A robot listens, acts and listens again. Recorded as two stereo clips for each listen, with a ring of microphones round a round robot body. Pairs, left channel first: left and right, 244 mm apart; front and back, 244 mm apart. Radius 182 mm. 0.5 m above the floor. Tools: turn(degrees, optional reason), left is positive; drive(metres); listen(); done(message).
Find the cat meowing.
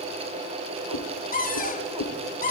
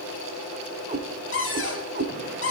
turn(degrees=130, reason="The cat meowing: 130° left.")
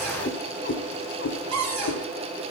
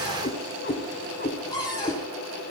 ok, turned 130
turn(degrees=60, reason="The cat meowing is now 60° left.")
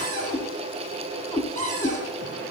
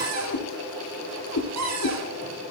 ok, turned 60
turn(degrees=15, reason="The cat meowing is now 15° left.")
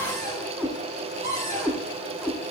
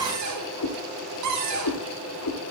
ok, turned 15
done("Found it: a cat meowing, straight ahead, 2 to 4 m away.")